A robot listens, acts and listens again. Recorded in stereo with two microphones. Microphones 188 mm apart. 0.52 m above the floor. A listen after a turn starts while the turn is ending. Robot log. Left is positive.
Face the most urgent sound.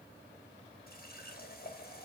cmd idle
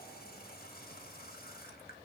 cmd idle
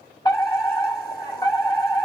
note: The fire alarm: about 25° left or 155° left.
cmd yaw +25
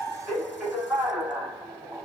end: Facing the fire alarm, over 4 m away.